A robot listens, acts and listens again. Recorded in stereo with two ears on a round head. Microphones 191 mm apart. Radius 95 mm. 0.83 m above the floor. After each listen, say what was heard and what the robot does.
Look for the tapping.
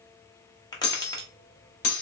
The tapping: about 20° left or 160° left. Turn 20° left.
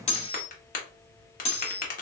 So it is at 140° left. Turn 140° left.
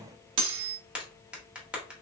Found it: tapping, straight ahead.